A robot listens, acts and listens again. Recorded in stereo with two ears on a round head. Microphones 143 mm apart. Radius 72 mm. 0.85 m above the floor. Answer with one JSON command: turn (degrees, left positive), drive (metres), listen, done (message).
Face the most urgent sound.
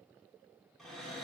{"listen": true}
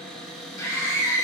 {"turn": 20}
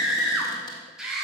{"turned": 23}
{"done": "Found it: a scream, straight ahead."}